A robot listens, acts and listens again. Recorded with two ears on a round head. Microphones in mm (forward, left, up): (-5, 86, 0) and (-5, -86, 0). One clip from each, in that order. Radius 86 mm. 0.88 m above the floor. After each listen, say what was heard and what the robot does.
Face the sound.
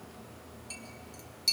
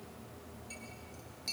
The clink: about 35° left or 145° left. Turn 35° left.
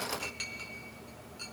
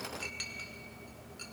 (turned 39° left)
Found it: a clink, straight ahead, 2 to 4 m away.